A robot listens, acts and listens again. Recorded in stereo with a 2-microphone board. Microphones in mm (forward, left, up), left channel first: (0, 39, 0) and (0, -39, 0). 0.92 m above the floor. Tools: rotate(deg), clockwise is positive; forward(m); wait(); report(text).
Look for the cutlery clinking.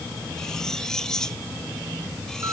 rotate(-30)
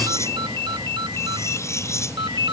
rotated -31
rotate(-140)
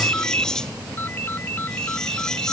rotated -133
report("Facing the cutlery clinking.")